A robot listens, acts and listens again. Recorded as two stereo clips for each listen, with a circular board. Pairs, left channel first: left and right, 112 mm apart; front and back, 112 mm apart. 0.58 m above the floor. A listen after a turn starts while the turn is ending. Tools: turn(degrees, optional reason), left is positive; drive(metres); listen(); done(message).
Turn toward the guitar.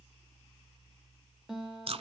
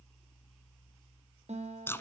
turn(degrees=-175, reason="The guitar: 175° right.")
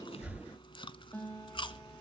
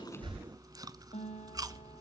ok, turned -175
turn(degrees=20, reason="The guitar is now 20° left.")
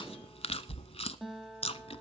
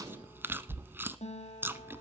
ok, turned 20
done("Found it: a guitar, straight ahead, 2 to 4 m away.")